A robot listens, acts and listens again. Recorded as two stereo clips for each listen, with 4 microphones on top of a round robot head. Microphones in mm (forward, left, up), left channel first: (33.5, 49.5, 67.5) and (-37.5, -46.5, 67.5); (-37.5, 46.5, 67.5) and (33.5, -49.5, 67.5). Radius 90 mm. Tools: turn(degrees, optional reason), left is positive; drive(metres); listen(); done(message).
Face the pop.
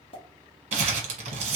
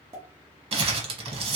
turn(degrees=10, reason="The pop: 10° left.")
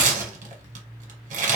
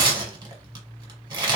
done("I heard a pop from this way, but can't make it out now.")